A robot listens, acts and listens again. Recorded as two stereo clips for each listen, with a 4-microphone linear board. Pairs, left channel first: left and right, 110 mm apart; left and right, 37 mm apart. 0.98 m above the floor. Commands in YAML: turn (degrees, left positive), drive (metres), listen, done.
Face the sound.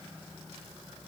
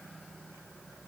listen: true
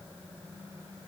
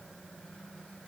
listen: true
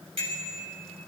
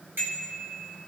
turn: -70
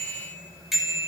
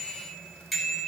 done: "Facing the bicycle bell."